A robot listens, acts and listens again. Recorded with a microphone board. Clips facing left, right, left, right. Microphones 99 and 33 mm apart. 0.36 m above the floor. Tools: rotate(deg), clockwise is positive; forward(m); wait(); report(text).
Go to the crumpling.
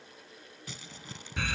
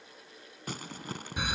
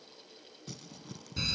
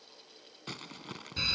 rotate(55)
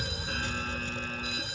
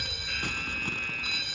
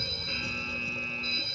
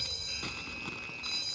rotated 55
wait()
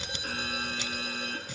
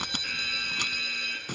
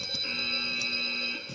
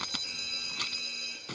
rotate(65)
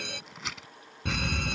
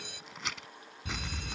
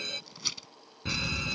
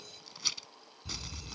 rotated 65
forward(1.0)
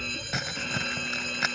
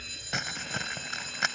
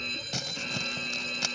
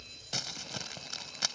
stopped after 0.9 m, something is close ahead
report("Arrived at the crumpling, straight ahead.")